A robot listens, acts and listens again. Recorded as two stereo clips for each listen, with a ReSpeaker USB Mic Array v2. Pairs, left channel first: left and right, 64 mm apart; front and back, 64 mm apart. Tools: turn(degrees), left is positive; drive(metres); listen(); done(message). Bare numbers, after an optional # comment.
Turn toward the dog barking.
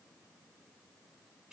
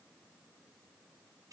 listen()
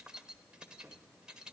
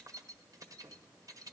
listen()
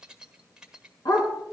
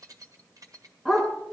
# The dog barking: 90° left.
turn(90)
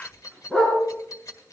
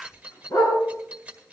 # The dog barking is now 10° left.
turn(10)
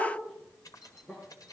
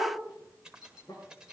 listen()
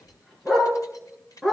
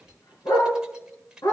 done("Found it: a dog barking, straight ahead.")